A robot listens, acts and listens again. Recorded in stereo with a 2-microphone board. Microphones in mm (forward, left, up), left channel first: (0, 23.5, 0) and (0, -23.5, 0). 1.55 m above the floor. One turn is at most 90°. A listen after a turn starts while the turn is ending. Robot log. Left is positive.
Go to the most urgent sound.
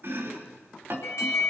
cmd yaw +90
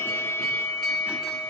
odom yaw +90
note: So it is at 10° left.
cmd yaw +10
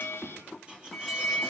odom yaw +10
cmd fwd 1.0
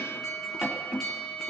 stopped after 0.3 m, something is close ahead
end: Blocked. The alarm is further on, straight ahead.